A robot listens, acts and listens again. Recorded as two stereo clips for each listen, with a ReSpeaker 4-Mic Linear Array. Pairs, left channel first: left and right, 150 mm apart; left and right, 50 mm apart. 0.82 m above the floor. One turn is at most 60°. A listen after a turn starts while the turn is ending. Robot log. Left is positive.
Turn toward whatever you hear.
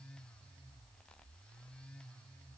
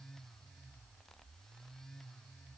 cmd idle
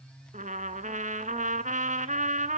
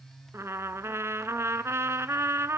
note: The trumpet: about 60° right or 120° right.
cmd yaw -60
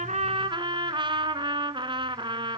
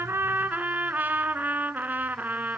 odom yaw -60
note: So it is at 40° right.
cmd yaw -40
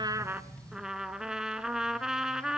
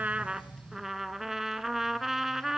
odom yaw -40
end: Facing the trumpet.